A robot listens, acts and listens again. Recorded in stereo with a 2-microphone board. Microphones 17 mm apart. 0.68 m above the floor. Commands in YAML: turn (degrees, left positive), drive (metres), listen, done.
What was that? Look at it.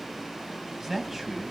turn: -25
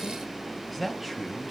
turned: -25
turn: -30
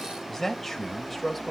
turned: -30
turn: 10
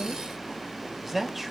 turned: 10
turn: -15
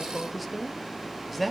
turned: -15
done: "Found it: a man speaking, straight ahead, 2 to 4 m away."